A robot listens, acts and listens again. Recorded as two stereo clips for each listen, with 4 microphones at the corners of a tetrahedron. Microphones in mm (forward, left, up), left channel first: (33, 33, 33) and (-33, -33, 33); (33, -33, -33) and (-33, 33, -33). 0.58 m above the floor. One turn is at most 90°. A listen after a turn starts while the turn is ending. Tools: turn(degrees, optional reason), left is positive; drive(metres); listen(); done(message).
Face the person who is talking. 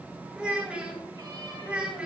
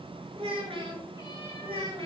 turn(degrees=90, reason="The child speaking: 145° left.")
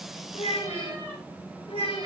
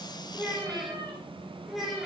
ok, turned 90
turn(degrees=45, reason="The child speaking is now 45° left.")
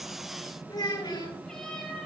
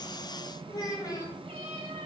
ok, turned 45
done("Facing the child speaking.")